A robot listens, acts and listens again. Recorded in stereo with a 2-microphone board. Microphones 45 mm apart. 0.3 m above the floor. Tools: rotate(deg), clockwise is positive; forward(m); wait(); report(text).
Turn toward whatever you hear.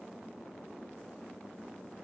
wait()
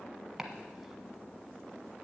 rotate(30)
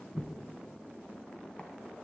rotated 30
rotate(-25)
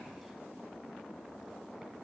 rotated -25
wait()
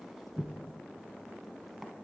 report("Found it: chopping, straight ahead, 1 to 2 m away.")